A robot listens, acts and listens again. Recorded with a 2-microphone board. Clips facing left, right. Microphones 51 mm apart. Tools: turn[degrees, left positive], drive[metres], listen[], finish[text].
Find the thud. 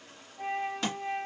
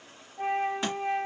Action: turn[-30]
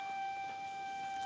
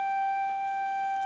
Action: listen[]
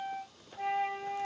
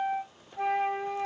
Action: finish[I heard a thud, but can't make it out now. It was about 20° left or 140° right.]